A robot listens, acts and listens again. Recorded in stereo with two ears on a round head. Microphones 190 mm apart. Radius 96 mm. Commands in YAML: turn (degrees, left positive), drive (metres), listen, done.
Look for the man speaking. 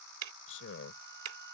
turn: 60
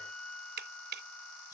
listen: true
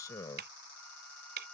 turn: 20
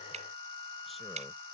listen: true
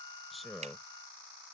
done: "Found it: a man speaking, straight ahead."